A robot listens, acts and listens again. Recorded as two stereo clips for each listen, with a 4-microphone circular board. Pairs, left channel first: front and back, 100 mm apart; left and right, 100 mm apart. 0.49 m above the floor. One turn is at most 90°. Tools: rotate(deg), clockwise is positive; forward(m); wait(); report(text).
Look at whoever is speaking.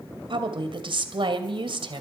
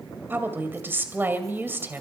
rotate(90)
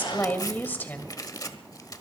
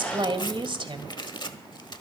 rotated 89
rotate(70)
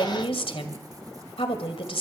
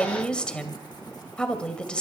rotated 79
rotate(-10)
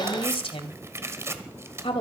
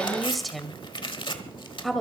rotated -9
report("Found it: a woman speaking, straight ahead.")